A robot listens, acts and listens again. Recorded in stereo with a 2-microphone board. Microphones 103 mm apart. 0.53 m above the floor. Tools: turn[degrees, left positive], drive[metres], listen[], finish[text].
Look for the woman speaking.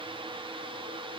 Action: listen[]
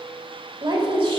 Thought: The woman speaking: about 55° right or 125° right.
Action: turn[-55]
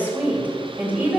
Thought: So it is at 15° right.
Action: turn[-15]
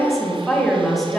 Action: finish[Found it: a woman speaking, straight ahead, 2 to 4 m away.]